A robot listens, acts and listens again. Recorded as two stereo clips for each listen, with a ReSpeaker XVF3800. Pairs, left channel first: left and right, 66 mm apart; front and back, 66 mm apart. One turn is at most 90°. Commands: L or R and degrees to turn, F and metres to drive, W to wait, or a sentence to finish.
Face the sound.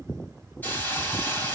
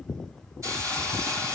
L90
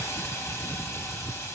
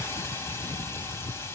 L45
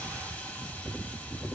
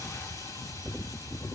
L20
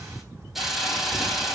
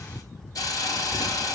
Found it: a hiss, straight ahead.